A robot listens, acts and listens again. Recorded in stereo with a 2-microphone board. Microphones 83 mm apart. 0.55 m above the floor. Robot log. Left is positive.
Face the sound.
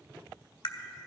cmd yaw +90
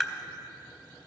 end: Found it: tapping, straight ahead, under 1 m away.